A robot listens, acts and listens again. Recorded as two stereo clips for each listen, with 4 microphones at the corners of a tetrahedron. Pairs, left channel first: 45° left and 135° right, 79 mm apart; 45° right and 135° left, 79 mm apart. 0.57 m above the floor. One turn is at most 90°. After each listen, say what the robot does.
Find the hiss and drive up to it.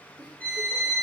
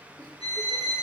Keep listening.
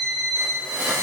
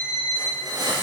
Turn 90° left.
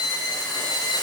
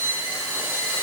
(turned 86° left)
Turn 65° left.
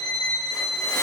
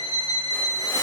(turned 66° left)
Keep listening.
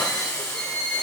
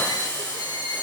Drive 1.0 m forward.
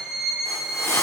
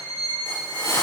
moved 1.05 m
Drive 1.0 m forward.
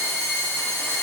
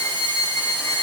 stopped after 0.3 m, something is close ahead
Keep listening.
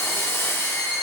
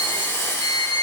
I am next to the hiss.